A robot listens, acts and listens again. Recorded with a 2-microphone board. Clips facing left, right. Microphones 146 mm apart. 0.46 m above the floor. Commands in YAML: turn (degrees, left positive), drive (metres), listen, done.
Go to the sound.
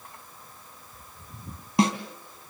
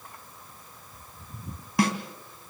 turn: 20
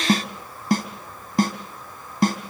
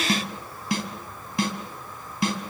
turn: 140
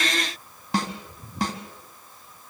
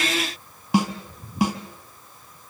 drive: 1.0
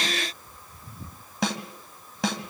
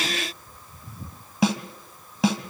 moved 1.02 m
drive: 1.0
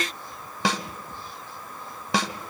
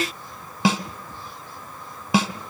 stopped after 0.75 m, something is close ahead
turn: -10
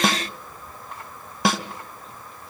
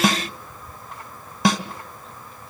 done: "I am next to the snare drum."